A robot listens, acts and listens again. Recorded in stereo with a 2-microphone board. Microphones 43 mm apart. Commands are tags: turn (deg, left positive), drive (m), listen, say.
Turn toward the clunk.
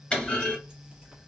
<turn deg="25"/>
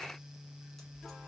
<listen/>
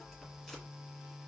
<say>I heard a clunk, but can't make it out now. It was about straight ahead or 130° left.</say>